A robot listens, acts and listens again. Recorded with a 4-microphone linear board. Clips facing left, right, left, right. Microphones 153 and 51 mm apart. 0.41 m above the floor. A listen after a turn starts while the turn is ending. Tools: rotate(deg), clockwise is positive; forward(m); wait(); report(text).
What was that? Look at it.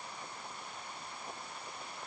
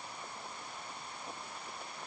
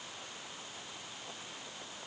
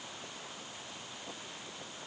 wait()
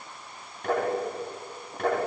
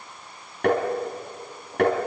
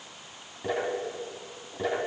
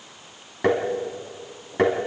rotate(75)
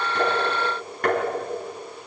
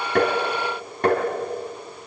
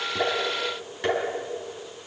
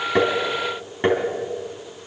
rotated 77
rotate(25)
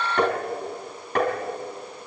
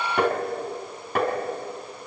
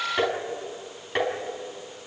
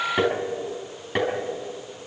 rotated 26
report("Found it: tapping, straight ahead.")